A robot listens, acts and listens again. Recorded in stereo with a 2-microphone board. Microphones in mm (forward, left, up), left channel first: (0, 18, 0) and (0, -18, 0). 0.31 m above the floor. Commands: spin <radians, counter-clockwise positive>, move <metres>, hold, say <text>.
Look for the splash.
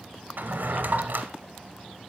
hold
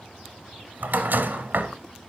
hold
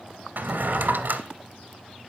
say I can't make out a splash to turn to.